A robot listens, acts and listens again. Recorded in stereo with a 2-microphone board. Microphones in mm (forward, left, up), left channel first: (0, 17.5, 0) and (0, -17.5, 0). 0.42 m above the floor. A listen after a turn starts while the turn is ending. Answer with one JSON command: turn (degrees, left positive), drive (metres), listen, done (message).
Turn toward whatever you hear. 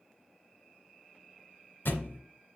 {"turn": 90}
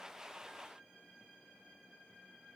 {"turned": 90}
{"done": "I heard a thud from this way, but can't make it out now."}